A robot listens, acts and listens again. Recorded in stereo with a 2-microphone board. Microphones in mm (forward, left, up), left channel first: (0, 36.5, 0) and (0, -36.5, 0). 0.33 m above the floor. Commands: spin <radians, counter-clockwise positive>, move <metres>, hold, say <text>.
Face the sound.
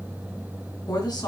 spin 1.22
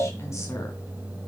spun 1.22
hold
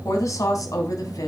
spin 0.96
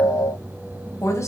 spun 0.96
spin 0.70
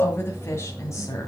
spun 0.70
spin 0.70
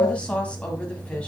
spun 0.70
spin 0.26
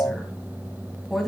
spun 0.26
say Found it: a woman speaking, straight ahead.